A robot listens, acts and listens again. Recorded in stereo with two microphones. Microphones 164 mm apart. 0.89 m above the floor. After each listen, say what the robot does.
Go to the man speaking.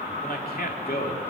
Turn 70° left.
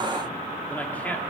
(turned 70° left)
Turn 10° left.
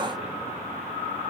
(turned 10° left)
Keep listening.
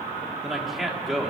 Drive 1.0 m forward.
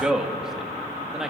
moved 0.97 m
Drive 1.0 m forward.
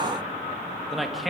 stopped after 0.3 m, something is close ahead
Arrived at the man speaking, straight ahead.